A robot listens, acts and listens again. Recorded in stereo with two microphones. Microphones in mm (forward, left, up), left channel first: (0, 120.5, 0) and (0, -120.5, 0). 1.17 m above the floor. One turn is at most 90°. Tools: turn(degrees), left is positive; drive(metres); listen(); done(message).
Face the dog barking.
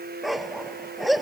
turn(degrees=30)
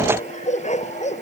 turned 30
turn(degrees=90)
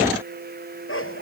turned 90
turn(degrees=60)
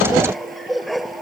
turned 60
done("Facing the dog barking.")